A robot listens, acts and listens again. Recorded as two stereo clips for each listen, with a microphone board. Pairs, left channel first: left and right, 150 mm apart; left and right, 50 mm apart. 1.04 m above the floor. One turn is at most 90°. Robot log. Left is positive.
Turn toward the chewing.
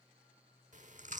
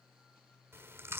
note: The chewing: about 55° right or 125° right.
cmd yaw -55
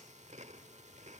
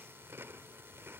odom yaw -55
note: So it is at 60° right.
cmd yaw -60
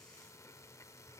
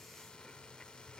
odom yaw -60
note: The chewing is now 20° left.
cmd yaw +20
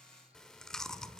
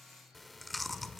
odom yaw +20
end: Found it: chewing, straight ahead, 1 to 2 m away.